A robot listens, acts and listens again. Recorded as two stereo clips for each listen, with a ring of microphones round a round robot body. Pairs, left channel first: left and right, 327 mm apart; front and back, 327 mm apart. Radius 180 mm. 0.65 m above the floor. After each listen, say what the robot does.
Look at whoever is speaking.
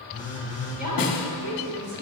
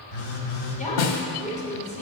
Turn 70° right.
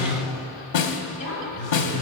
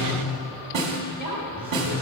Turn 30° left.
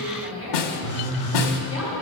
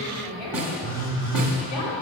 Found it: a woman speaking, straight ahead, 2 to 4 m away.